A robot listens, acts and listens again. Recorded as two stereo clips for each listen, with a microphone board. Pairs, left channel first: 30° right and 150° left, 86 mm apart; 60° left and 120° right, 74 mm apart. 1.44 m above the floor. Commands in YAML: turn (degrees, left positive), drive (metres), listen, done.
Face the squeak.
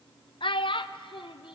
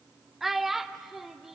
listen: true
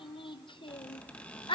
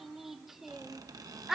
turn: -105
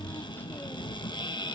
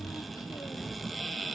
turn: -30
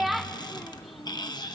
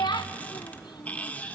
done: "Facing the squeak, 1 to 2 m away."